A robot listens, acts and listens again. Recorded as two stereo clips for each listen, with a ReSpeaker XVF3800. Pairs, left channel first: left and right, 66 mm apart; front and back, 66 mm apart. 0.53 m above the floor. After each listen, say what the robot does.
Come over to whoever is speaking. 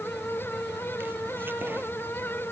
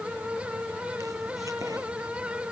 Keep listening.
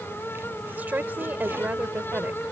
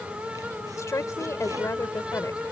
Turn 30° right.
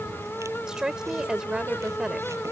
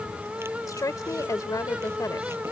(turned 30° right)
Turn 10° right.
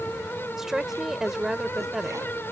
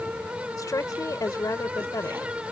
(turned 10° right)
Drive 1.0 m forward.
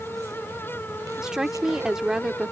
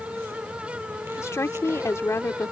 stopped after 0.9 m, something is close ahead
Turn 10° right.
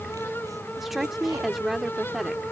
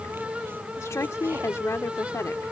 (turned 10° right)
I am next to the woman speaking.